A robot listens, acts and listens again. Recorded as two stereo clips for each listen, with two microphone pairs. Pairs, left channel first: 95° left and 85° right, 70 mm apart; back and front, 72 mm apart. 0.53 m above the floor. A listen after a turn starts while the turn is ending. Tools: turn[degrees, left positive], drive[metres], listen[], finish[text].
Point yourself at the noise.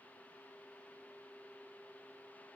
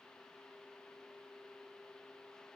Action: listen[]
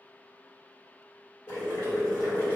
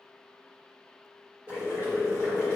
Thought: The boiling: 55° left.
Action: turn[55]
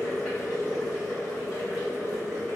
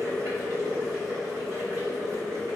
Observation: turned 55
Thought: The boiling is now 15° right.
Action: turn[-15]
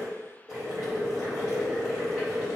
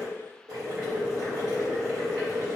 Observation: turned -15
Action: finish[Found it: boiling, straight ahead, 1 to 2 m away.]